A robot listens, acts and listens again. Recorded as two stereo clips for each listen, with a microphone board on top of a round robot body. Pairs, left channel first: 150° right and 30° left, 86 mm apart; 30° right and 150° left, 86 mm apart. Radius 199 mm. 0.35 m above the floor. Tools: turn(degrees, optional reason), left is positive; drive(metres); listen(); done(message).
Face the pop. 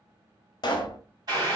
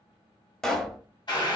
turn(degrees=-115, reason="The pop: 115° right.")
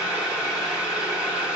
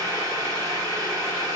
done("I heard a pop from this way, but can't make it out now.")